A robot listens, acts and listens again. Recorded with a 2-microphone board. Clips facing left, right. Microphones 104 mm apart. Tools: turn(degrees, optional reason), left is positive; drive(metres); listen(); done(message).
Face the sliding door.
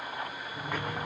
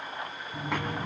turn(degrees=-90)
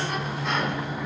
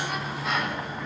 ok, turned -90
done("Found it: a sliding door, straight ahead.")